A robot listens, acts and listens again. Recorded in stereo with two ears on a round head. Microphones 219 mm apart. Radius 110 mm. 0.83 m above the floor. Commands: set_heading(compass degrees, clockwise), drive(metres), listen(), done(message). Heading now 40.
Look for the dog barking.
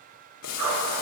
set_heading(130)
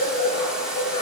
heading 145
set_heading(120)
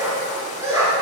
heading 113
set_heading(128)
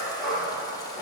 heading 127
done("Found it: a dog barking, straight ahead, over 4 m away.")